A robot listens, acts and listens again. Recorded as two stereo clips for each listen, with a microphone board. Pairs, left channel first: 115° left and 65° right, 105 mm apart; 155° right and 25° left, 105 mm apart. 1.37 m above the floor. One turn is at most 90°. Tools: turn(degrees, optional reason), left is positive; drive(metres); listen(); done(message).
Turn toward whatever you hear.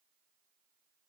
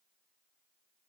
listen()
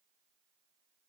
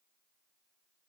listen()
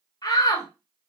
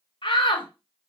turn(degrees=90, reason="The shout: 165° left.")
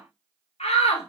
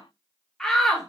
turn(degrees=90, reason="The shout is now 115° left.")
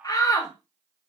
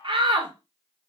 turn(degrees=60, reason="The shout is now 60° left.")
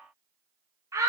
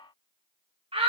done("Found it: a shout, straight ahead.")